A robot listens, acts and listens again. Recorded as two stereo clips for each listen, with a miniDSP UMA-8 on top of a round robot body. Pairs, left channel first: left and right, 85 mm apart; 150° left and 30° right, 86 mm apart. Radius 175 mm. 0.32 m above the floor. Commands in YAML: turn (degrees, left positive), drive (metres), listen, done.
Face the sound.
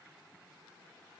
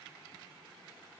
listen: true
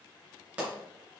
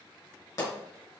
turn: -165
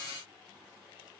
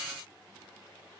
done: "I heard a pop from this way, but can't make it out now."